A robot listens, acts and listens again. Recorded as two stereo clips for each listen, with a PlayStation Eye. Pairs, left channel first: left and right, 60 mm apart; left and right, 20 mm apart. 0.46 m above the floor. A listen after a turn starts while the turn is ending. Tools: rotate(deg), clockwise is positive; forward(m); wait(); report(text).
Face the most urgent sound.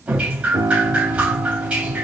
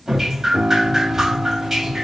wait()
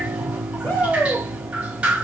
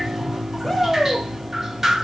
rotate(-40)
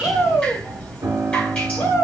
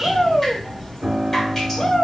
rotate(-95)
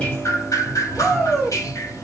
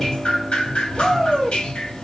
rotate(-25)
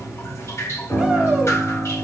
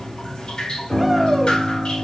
wait()
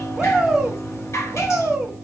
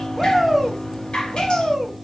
rotate(10)
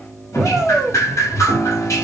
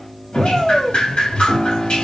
report("Found it: a shout, straight ahead.")